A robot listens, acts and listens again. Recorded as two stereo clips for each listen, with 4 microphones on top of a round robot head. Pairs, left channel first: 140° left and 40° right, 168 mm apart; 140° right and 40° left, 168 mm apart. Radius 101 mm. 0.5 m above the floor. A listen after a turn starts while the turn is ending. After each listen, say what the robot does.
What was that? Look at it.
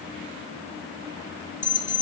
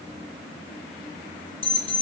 Turn 170° left.
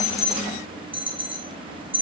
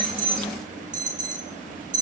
Turn 10° left.
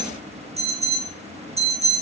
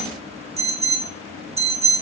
Found it: an alarm, straight ahead.